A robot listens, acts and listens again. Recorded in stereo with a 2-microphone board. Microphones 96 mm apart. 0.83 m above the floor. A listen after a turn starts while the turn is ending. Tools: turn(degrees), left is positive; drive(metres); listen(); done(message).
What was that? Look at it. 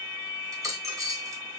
turn(degrees=-35)
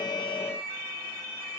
listen()
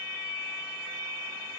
done("I heard a dropped coin, but can't make it out now. It was about straight ahead or 110° right.")